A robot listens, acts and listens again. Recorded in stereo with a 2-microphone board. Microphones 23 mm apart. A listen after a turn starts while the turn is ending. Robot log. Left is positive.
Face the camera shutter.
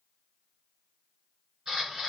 note: The camera shutter: about 35° right or 145° right.
cmd yaw -35
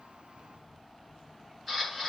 end: Facing the camera shutter, 1 to 2 m away.